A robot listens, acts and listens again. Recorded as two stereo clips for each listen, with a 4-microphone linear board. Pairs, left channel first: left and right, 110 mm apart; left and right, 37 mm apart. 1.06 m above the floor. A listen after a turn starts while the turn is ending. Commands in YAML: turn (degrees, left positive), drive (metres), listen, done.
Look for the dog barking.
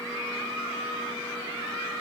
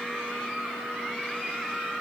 listen: true
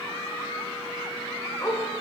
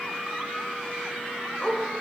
turn: 25
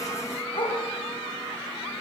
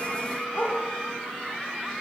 turn: 130
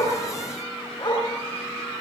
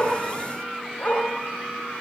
turn: 40
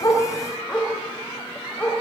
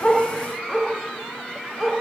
turn: 10
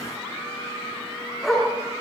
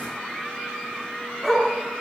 done: "Facing the dog barking."